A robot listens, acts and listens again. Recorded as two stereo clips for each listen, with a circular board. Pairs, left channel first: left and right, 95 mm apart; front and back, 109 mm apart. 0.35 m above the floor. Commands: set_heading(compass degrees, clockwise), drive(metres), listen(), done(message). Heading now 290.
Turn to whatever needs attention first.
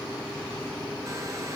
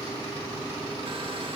listen()
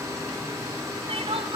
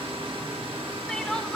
set_heading(15)
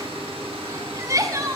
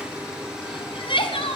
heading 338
set_heading(13)
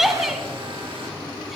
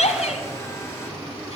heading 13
done("Facing the crying, 1 to 2 m away.")